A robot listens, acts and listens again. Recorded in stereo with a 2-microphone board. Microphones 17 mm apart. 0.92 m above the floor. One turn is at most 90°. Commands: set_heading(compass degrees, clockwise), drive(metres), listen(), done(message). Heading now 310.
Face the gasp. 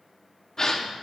set_heading(280)
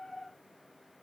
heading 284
listen()
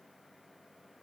done("I heard a gasp, but can't make it out now. It was about straight ahead or 125° left.")